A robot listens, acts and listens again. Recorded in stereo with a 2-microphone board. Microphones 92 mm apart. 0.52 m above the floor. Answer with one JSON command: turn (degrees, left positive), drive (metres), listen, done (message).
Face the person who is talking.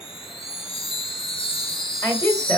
{"turn": 35}
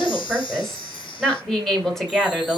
{"done": "Found it: a woman speaking, straight ahead, 2 to 4 m away."}